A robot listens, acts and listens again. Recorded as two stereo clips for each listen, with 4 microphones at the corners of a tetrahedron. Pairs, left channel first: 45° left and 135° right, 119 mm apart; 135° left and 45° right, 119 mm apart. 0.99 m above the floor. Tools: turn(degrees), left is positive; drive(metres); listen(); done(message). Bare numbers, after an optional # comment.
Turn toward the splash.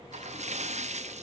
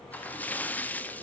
# The splash: 150° right.
turn(-150)
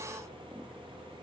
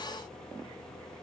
done("I heard a splash from this way, but can't make it out now.")